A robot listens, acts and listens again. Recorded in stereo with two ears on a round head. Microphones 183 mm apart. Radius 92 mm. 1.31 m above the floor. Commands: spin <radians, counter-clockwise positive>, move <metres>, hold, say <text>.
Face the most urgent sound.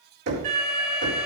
spin -0.70
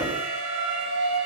spin -1.66
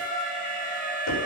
say Facing the alarm.